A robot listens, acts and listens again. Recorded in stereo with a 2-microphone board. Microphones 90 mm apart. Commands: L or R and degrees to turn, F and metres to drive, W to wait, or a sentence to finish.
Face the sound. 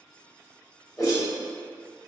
L40
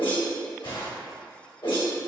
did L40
L100
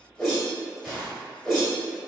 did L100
Facing the whoosh.